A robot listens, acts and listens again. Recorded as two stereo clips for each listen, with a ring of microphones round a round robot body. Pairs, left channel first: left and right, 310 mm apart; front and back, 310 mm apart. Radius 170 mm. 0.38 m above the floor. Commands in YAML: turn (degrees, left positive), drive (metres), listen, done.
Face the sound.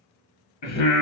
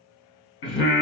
turn: 50
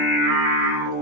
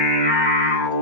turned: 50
done: "Facing the singing."